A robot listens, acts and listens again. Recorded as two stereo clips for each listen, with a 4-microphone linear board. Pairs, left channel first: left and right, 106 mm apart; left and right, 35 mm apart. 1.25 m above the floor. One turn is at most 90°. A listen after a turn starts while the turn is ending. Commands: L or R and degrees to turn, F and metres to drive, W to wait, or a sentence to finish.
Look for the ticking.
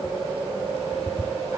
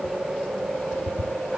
L90
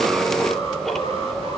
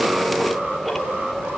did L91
W
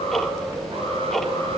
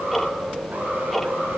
Found it: ticking, straight ahead.